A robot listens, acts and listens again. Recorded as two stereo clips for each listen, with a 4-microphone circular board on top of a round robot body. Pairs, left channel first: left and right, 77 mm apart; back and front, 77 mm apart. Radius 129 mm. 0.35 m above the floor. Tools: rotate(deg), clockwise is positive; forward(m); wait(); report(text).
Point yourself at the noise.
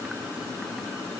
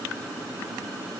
wait()
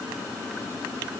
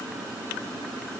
wait()
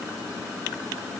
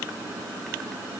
report("I can't make out anything to turn to.")